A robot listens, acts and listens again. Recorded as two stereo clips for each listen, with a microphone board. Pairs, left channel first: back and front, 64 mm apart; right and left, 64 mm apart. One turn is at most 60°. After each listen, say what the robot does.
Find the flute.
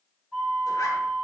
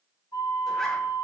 Turn 60° right.
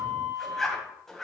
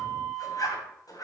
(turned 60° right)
Turn 10° right.
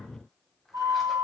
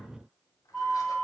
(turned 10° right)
Found it: a flute, straight ahead.